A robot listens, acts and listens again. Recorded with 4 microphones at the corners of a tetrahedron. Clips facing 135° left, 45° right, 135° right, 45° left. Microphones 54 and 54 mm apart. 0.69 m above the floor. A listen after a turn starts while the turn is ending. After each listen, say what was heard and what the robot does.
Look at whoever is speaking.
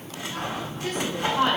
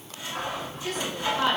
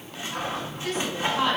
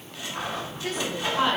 The woman speaking: 110° left. Turn 110° left.
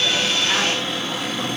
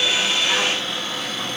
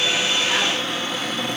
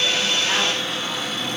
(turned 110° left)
Keep listening.
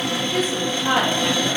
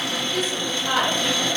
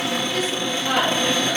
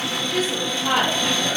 The woman speaking is now 100° left. Turn 100° left.
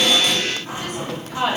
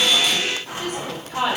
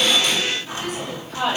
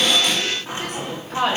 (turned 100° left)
The woman speaking is now 25° left. Turn 25° left.
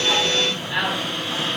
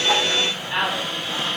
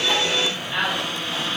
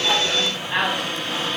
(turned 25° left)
Found it: a woman speaking, straight ahead, 1 to 2 m away.